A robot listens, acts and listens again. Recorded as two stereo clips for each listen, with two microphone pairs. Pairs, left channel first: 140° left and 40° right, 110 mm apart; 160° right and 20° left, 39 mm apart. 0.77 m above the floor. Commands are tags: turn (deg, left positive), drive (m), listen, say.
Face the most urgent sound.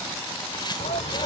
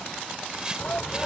<turn deg="155"/>
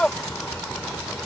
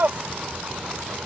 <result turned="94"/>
<turn deg="60"/>
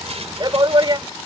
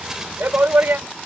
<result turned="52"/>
<say>Found it: a shout, straight ahead.</say>